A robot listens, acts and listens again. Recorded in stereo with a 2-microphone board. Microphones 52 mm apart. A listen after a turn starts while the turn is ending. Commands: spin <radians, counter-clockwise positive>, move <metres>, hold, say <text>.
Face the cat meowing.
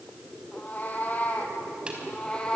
spin 0.35
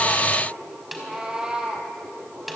spin -0.26
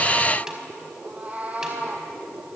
spin -0.52
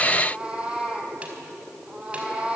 spin -0.35
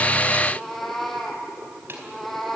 say Found it: a cat meowing, straight ahead, 2 to 4 m away.